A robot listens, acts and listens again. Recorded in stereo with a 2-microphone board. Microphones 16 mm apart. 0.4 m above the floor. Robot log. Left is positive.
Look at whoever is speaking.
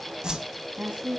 note: The woman speaking: about 70° right or 110° right.
cmd yaw -70
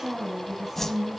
note: So it is at 15° right.
cmd yaw -15
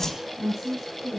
note: The woman speaking is now 10° right.
cmd yaw -10
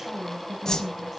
end: Found it: a woman speaking, straight ahead.